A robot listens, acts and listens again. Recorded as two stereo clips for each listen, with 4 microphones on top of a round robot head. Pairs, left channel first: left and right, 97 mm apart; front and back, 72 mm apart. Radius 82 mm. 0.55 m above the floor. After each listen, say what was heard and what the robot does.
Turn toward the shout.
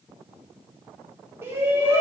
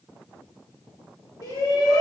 The shout: 30° right. Turn 30° right.
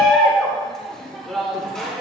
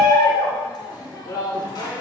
Found it: a shout, straight ahead, 2 to 4 m away.